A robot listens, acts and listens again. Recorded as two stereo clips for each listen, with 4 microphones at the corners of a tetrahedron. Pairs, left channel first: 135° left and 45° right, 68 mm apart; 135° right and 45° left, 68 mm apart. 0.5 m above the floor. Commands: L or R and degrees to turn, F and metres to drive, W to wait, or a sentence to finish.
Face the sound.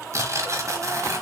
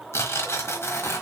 R85
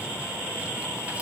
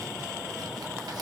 W
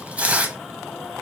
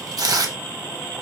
L25
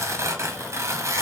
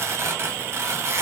Found it: tearing paper, straight ahead, 1 to 2 m away.